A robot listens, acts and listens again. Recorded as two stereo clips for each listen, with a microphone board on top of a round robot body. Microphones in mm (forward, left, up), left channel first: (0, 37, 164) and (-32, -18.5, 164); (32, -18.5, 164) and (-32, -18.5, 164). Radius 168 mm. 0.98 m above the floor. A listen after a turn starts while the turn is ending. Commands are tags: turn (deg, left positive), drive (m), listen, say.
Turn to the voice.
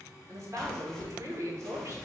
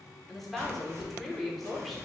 <turn deg="-85"/>
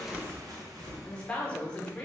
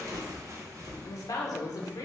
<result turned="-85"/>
<turn deg="-10"/>
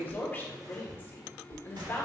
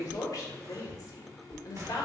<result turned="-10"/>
<say>Found it: a woman speaking, straight ahead, 1 to 2 m away.</say>